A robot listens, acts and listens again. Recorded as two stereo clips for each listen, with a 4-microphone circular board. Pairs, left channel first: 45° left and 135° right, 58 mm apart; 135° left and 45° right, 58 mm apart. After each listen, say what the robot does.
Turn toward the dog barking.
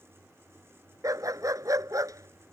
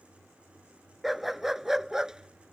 Turn 125° right.
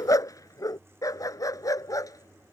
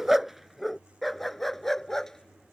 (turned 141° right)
Turn 55° left.
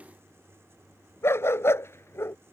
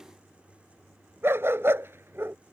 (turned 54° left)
Facing the dog barking.